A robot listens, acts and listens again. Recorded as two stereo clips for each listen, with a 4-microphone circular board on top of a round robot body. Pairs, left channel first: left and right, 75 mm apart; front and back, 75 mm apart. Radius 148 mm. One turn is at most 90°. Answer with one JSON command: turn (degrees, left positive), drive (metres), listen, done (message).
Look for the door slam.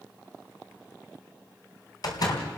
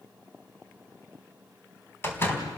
{"turn": 60}
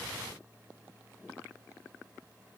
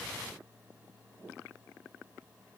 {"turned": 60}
{"done": "I heard a door slam from this way, but can't make it out now."}